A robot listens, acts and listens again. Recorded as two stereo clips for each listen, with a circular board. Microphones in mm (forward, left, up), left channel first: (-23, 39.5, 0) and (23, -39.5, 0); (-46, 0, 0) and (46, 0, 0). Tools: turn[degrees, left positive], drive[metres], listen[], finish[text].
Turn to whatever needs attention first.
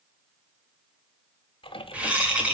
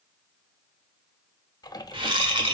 Action: listen[]
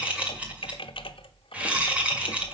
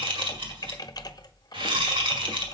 Action: listen[]
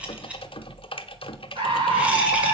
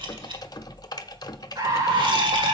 Thought: The scream: 50° right.
Action: turn[-50]
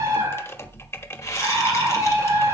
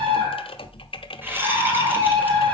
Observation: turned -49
Action: finish[Facing the scream.]